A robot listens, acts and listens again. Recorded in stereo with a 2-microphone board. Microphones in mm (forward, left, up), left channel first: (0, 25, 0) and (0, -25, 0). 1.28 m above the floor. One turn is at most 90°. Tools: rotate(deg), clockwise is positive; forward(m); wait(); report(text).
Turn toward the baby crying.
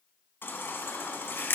rotate(-45)
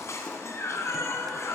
rotate(-85)
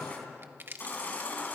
rotate(-40)
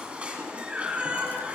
rotate(25)
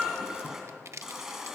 rotate(10)
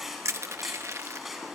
report("Found it: a baby crying, straight ahead.")